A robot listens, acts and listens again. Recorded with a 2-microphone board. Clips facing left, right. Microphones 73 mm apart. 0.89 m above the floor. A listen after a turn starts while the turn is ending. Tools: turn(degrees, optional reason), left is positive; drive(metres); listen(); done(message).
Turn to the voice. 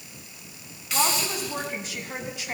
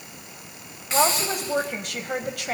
turn(degrees=-65, reason="The woman speaking: about 65° right or 115° right.")
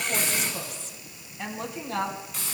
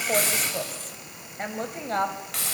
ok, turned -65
turn(degrees=-45, reason="So it is at 45° right.")
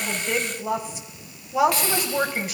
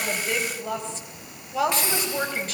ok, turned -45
turn(degrees=10, reason="The woman speaking is now 10° left.")
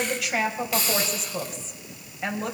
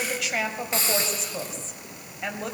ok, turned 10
done("Facing the woman speaking.")